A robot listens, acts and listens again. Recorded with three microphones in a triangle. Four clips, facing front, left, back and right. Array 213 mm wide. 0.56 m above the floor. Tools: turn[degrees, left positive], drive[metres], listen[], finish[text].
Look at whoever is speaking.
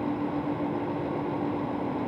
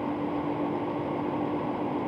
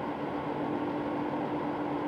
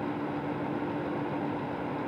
Action: listen[]
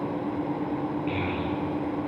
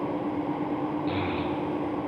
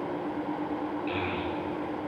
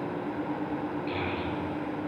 Thought: The child speaking: 65° left.
Action: turn[65]
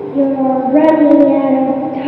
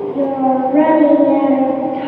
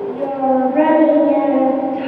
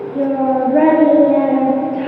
Thought: The child speaking is now 15° right.
Action: turn[-15]
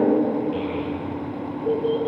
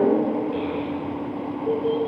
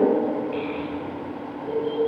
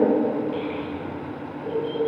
Action: finish[Found it: a child speaking, straight ahead.]